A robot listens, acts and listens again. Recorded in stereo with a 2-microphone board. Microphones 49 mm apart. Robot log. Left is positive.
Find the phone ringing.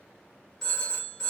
cmd yaw +30
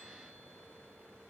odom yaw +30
cmd idle
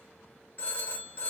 note: So it is at 145° left.
cmd yaw +145
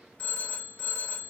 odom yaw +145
note: The phone ringing is now 25° left.
cmd yaw +25
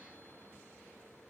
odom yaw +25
cmd idle
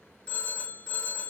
note: The phone ringing is now 25° left.
cmd yaw +25
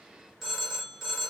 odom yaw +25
end: Facing the phone ringing, 1 to 2 m away.